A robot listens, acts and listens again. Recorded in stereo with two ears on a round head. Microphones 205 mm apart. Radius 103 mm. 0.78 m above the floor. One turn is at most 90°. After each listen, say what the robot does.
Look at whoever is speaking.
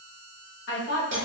Turn 55° left.
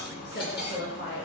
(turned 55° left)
Turn 55° left.
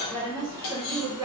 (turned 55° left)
Turn 20° right.
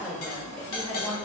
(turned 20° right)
Facing the woman speaking.